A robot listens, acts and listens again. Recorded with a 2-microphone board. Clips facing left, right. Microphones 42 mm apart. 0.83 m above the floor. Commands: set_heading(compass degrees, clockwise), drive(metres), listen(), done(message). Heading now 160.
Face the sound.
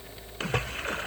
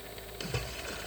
set_heading(110)
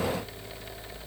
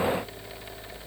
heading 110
listen()
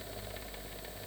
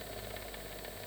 done("I heard a splash, but can't make it out now. It was about straight ahead or 80° left.")